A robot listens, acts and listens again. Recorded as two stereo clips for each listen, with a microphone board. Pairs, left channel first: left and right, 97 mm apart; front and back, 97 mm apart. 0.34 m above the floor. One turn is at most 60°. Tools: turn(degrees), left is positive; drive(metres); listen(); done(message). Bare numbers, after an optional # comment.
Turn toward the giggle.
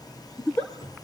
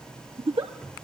# The giggle: 160° left.
turn(60)
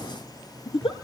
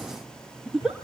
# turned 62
# The giggle is now 95° left.
turn(60)
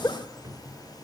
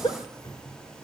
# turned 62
# The giggle is now 35° left.
turn(35)
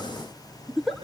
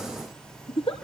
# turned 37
done("Facing the giggle, 1 to 2 m away.")